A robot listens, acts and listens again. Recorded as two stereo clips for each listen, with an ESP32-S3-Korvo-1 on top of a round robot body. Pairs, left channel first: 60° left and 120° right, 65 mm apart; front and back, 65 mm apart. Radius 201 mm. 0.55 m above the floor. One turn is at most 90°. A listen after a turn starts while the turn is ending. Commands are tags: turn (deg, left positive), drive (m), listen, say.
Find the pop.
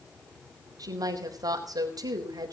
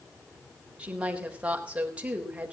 <listen/>
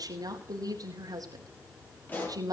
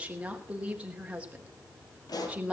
<say>Found it: a pop, straight ahead.</say>